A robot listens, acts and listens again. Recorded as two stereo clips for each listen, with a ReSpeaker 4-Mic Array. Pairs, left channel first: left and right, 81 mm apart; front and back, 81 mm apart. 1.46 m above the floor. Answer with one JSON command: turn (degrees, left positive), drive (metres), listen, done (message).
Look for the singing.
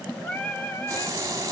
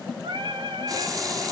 {"turn": 155}
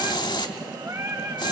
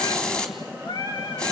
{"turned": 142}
{"turn": -35}
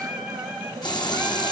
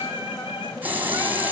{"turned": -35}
{"turn": -10}
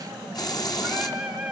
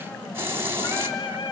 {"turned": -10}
{"done": "Facing the singing."}